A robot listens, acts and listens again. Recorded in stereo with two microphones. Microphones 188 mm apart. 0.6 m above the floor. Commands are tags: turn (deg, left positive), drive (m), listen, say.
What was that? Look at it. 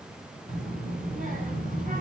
<turn deg="-45"/>
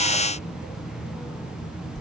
<say>Found it: a child speaking, straight ahead, 2 to 4 m away.</say>